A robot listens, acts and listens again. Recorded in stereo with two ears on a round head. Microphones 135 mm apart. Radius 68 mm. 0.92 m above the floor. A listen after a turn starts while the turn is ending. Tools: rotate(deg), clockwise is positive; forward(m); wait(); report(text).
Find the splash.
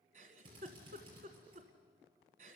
wait()
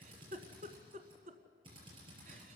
wait()
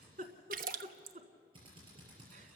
rotate(60)
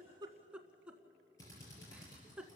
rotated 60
wait()
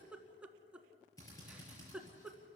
report("I heard a splash, but can't make it out now. It was about straight ahead or 60° right.")